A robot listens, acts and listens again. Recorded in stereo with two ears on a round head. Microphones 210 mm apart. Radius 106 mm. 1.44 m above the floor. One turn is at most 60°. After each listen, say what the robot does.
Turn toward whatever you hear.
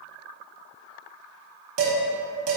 Turn 60° right.
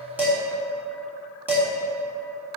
Turn 10° right.
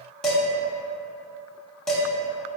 Facing the dishes clattering, 1 to 2 m away.